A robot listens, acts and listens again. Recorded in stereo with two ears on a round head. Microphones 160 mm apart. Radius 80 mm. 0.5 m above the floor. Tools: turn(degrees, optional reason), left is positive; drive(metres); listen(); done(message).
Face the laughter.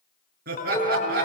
turn(degrees=-55, reason="The laughter: about 55° right or 125° right.")
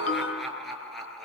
done("Found it: laughter, straight ahead.")